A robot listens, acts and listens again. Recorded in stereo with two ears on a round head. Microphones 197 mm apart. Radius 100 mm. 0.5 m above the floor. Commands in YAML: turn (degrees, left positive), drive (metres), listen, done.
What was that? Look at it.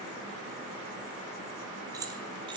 turn: -20
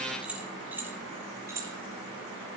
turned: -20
turn: -30
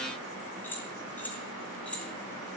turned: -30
done: "Facing the keys jangling, 2 to 4 m away."